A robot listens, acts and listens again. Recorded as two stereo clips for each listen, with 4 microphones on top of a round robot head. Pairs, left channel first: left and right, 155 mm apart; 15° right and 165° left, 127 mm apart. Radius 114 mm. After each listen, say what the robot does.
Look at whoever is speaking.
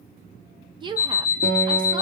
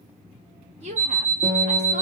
Turn 150° right.
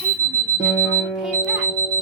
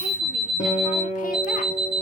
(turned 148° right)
Keep listening.
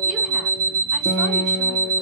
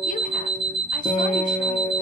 Keep listening.
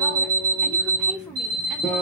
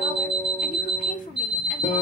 Facing where the woman speaking came from. I can't hear it now.